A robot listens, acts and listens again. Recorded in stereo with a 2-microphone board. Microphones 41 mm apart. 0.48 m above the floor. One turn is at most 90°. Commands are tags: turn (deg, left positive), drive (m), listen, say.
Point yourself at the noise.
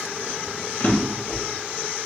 <turn deg="55"/>
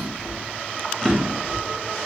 <say>Found it: a drawer, straight ahead.</say>